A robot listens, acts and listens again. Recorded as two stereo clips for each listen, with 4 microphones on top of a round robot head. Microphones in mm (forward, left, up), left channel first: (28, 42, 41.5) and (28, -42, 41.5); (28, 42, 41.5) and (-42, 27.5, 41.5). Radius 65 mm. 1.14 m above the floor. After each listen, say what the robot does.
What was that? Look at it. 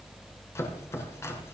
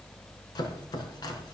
Turn 35° left.
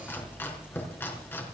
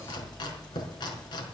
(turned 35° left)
Turn 25° left.
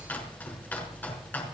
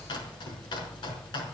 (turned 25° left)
Turn 20° left.
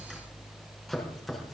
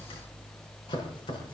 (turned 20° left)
Found it: chopping, straight ahead, over 4 m away.